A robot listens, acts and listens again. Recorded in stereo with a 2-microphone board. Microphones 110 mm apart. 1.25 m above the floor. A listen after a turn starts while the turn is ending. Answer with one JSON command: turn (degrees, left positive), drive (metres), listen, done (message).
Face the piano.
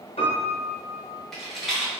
{"turn": 65}
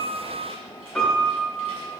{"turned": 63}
{"done": "Found it: a piano, straight ahead."}